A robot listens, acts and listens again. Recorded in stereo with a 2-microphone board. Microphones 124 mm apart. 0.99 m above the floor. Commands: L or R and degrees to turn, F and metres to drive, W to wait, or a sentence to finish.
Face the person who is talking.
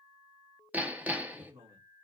R20
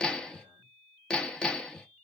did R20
W
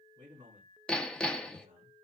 R140
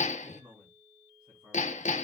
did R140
R45
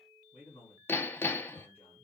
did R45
L15
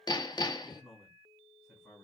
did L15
Found it: a man speaking, straight ahead.